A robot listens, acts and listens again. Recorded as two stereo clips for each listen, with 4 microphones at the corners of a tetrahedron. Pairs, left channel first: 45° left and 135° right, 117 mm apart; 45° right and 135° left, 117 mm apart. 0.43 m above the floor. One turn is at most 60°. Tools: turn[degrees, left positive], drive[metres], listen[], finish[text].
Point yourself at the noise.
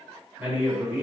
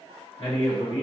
Thought: The man speaking: 65° right.
Action: turn[-60]
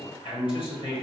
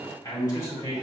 Thought: The man speaking is now 10° left.
Action: turn[10]
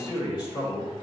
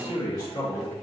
Action: finish[Facing the man speaking, 1 to 2 m away.]